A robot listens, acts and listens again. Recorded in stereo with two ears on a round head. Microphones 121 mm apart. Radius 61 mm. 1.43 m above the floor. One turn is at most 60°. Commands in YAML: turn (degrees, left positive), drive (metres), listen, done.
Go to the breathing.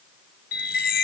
listen: true
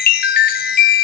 listen: true
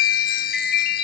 done: "I can't make out breathing, only a chime."